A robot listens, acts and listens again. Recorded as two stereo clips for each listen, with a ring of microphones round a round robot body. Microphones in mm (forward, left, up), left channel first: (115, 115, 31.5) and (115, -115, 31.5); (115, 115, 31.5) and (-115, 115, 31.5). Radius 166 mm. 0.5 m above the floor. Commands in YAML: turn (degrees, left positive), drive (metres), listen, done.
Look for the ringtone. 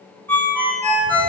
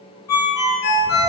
done: "Facing the ringtone."